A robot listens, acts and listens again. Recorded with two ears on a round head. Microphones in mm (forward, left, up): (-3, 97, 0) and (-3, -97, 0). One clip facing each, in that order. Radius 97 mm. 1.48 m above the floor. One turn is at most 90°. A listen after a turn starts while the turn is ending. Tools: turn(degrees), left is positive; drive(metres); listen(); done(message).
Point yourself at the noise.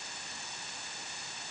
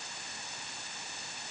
listen()
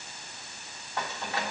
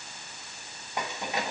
turn(degrees=-15)
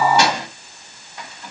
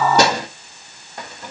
turn(degrees=-40)
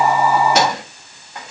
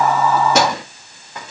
turn(degrees=-90)
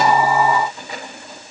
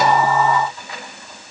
turn(degrees=20)
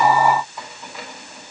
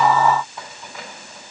listen()
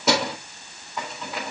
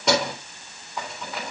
done("Found it: keys jangling, straight ahead.")